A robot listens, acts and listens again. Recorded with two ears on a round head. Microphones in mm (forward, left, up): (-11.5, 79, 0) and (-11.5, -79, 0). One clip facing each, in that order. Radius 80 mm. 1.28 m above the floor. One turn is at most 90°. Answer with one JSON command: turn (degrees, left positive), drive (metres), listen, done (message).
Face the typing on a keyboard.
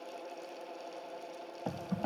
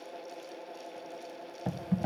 {"turn": -30}
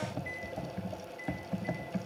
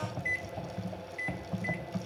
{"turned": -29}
{"turn": 15}
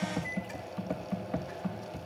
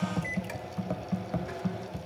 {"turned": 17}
{"done": "Facing the typing on a keyboard."}